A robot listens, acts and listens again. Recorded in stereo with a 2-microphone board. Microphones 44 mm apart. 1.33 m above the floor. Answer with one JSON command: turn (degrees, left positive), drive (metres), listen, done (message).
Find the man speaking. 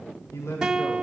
{"turn": 90}
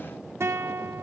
{"listen": true}
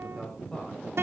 {"turn": 15}
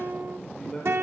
{"turn": 10}
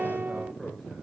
{"listen": true}
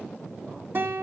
{"listen": true}
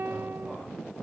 {"done": "Facing where the man speaking came from. I can't hear it now."}